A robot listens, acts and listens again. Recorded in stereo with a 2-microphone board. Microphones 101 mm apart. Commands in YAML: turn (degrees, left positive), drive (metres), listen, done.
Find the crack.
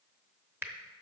turn: -25
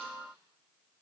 listen: true
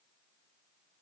done: "I heard a crack, but can't make it out now. It was about straight ahead or 130° right."